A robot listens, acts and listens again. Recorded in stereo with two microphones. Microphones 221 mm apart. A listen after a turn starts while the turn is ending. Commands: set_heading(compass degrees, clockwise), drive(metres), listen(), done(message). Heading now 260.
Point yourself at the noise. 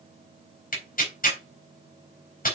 set_heading(220)
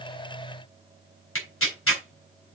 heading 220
set_heading(125)
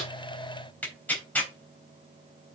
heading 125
done("Facing the tearing paper.")